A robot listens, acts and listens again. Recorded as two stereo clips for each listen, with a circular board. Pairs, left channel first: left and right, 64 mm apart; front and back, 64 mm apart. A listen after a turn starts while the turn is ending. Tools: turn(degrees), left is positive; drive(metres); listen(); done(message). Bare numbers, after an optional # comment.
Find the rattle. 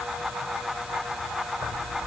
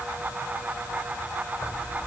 listen()
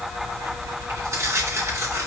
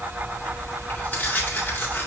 listen()
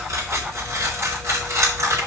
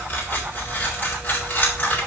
done("I can't make out a rattle, only tearing paper.")